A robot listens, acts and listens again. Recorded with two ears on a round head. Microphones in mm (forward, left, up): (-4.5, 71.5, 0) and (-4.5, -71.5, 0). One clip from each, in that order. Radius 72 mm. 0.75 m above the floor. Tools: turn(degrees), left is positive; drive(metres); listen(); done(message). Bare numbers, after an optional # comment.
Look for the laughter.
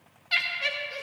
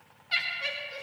# The laughter: about 30° left or 150° left.
turn(30)
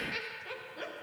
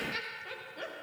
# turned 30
done("Found it: laughter, straight ahead.")